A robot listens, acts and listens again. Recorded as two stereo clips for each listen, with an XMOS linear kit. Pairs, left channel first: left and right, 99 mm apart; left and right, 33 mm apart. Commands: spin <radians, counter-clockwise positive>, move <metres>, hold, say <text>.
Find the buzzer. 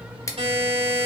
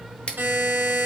spin -1.57
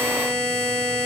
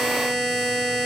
say Facing the buzzer, 2 to 4 m away.